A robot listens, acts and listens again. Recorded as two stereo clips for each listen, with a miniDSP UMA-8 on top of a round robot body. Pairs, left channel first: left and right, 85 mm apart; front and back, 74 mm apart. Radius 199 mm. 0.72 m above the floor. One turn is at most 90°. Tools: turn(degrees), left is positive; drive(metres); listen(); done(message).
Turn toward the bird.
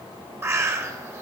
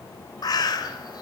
turn(degrees=-30)
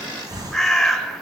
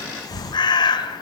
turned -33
done("Facing the bird, 1 to 2 m away.")